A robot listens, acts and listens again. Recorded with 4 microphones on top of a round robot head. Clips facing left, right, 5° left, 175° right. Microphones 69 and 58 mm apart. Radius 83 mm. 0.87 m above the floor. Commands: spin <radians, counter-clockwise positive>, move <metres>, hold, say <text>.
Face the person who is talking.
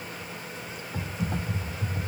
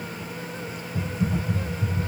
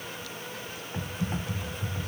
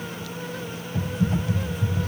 hold
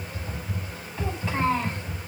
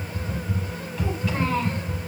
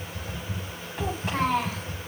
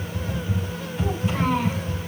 spin 0.52
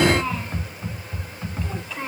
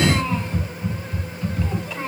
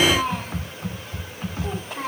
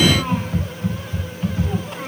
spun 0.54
say Facing the child speaking.